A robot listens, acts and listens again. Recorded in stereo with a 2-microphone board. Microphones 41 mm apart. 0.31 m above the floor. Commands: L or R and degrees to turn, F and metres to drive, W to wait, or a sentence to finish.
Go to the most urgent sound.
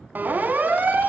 R45
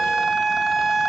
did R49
F1.0
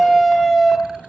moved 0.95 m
F1.0
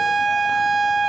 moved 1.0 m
F1.0
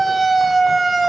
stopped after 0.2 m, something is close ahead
Arrived at the siren, straight ahead.